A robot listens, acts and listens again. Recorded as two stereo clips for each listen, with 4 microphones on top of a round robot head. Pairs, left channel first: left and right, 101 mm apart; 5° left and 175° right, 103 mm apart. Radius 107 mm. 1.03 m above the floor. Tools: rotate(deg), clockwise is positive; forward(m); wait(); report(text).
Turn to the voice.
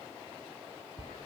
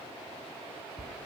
wait()
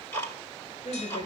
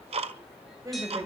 rotate(-130)
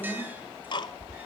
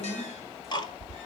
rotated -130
wait()
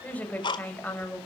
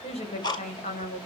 rotate(-15)
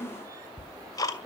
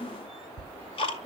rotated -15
report("Found it: a woman speaking, straight ahead, over 4 m away.")